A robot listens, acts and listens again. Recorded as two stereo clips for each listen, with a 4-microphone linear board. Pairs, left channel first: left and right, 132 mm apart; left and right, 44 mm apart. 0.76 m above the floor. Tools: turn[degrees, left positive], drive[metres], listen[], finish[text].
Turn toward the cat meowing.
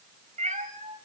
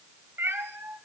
Thought: The cat meowing: about 70° right or 110° right.
Action: turn[-70]
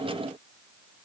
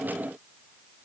Action: listen[]
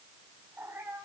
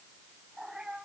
Thought: So it is at 15° right.
Action: turn[-15]
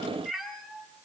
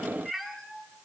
Action: finish[Facing the cat meowing.]